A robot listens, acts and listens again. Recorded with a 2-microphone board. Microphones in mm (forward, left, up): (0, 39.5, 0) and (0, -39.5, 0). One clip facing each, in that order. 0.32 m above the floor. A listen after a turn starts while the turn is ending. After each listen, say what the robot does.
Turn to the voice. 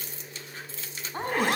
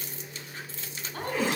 Turn 30° left.
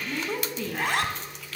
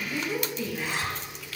Turn 125° left.
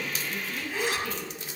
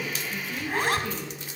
Turn 15° right.
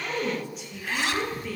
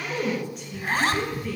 Found it: a woman speaking, straight ahead.